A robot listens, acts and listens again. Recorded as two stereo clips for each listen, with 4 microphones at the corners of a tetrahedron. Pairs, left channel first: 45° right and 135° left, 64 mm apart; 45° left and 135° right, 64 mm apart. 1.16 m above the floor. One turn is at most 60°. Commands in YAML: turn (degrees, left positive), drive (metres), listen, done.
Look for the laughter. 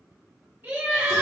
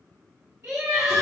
turn: -60
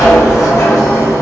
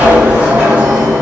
turn: -60
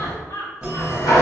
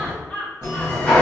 turn: -25
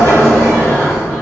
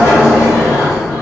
listen: true
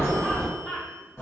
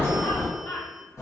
turn: 35
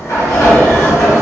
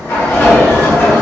listen: true
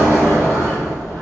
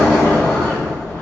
listen: true
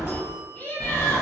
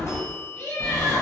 turn: 20
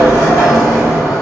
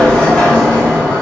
listen: true
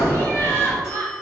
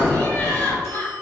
done: "Facing the laughter."